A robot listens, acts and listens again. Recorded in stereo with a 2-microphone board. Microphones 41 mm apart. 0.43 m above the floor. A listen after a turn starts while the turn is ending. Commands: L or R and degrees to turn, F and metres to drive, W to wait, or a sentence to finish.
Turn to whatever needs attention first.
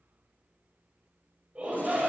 R35
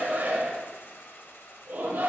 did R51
R90
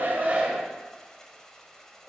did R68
R25
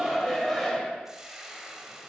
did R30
Found it: a shout, straight ahead.